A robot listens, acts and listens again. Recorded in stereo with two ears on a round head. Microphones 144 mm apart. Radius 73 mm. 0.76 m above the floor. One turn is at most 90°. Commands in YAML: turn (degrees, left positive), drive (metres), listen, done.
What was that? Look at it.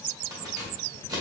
turn: -25
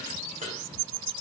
turn: -90
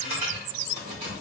turn: -40
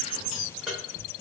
done: "Found it: keys jangling, straight ahead."